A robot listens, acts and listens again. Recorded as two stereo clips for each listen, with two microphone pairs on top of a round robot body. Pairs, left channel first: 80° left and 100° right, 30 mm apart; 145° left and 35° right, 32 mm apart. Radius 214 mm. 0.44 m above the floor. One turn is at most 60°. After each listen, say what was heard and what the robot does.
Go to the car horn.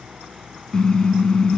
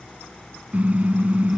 The car horn: 15° left. Turn 15° left.
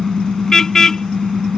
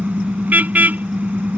Drive 1.0 m forward.
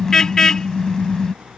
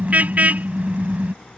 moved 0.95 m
The car horn is now 10° left. Turn 10° left.
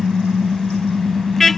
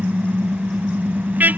Drive 1.0 m forward.
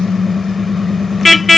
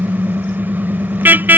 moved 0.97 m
The car horn is now 10° right. Turn 10° right.
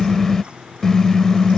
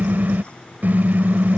Drive 1.0 m forward.
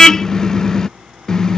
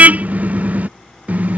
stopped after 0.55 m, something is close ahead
The car horn is now 10° left. Turn 10° left.
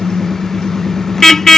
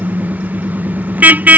I am next to the car horn.